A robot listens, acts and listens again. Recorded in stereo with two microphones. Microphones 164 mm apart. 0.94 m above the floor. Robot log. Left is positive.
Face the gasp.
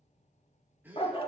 cmd yaw -30
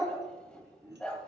cmd idle
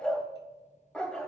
end: I heard a gasp, but can't make it out now. It was about 20° left or 140° right.